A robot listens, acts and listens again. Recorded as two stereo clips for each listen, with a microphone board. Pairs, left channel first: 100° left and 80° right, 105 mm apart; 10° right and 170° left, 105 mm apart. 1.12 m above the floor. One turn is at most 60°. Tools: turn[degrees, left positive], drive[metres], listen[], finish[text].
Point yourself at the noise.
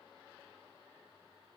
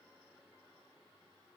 Action: listen[]
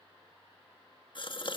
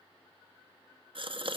Thought: The gasp: 135° left.
Action: turn[60]
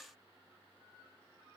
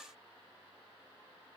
Thought: Nothing new. It was at 75° left.
Action: turn[60]
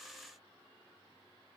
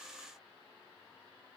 Thought: Nothing new. It was at 15° left.
Action: turn[15]
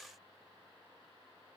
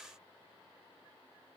Action: finish[Facing where the gasp came from. I can't hear it now.]